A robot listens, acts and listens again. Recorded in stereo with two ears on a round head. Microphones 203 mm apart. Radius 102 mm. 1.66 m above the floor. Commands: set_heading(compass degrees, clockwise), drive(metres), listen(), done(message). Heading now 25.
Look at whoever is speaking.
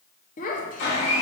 set_heading(345)
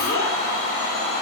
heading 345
listen()
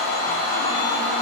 listen()
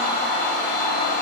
done("I heard a child speaking, but can't make it out now. It was about straight ahead or 100° left.")